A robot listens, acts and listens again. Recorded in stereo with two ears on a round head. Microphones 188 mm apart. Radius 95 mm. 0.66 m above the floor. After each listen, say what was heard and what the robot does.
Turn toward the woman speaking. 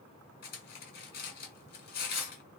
Keep listening.
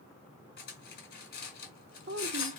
The woman speaking: about 60° right or 120° right. Turn 60° right.
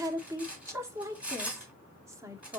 So it is at 15° right. Turn 15° right.
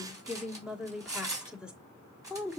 Found it: a woman speaking, straight ahead, 1 to 2 m away.